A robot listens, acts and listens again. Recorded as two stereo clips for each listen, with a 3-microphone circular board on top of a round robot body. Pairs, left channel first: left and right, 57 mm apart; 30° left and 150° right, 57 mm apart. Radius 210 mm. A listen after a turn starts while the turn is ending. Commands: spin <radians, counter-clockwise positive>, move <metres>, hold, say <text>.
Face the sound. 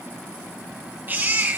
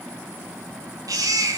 spin -2.62
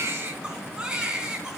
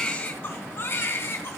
spin -0.26
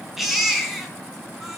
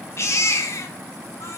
say Found it: a baby crying, straight ahead.